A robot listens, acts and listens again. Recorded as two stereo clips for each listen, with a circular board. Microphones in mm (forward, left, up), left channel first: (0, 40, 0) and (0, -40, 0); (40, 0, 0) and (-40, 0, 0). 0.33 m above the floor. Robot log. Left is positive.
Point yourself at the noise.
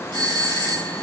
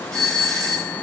note: The doorbell: 85° left.
cmd yaw +85
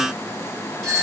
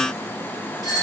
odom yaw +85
note: The doorbell is now 10° left.
cmd yaw +10
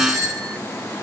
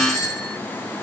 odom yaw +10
end: Facing the doorbell.